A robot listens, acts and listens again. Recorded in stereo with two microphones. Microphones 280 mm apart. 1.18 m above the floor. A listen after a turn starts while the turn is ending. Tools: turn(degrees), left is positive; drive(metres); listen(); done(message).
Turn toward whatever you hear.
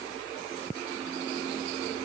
listen()
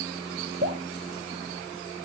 turn(degrees=-40)
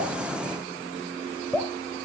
done("Facing the dripping, 2 to 4 m away.")